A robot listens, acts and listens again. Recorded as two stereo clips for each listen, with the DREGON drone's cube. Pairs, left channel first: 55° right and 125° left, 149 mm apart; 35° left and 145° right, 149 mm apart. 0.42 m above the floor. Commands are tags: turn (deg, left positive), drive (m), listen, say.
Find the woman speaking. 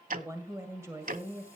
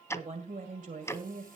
<turn deg="-160"/>
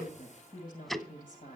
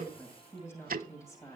<turn deg="-35"/>
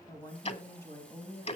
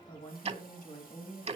<turn deg="15"/>
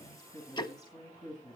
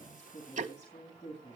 <say>Facing the woman speaking.</say>